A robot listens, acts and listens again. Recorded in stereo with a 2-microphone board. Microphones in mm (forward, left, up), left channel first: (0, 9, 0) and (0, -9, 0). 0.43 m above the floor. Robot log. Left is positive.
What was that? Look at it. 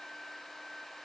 cmd idle
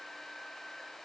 cmd idle
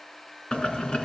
note: The boiling: about 65° left or 115° left.
cmd yaw +65
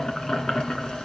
note: So it is at 50° left.
cmd yaw +50
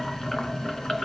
note: The boiling is now 35° left.
cmd yaw +35
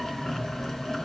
note: The boiling is now 30° left.
cmd yaw +30
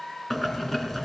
note: The boiling is now 15° left.
cmd yaw +15
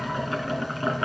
end: Facing the boiling, 2 to 4 m away.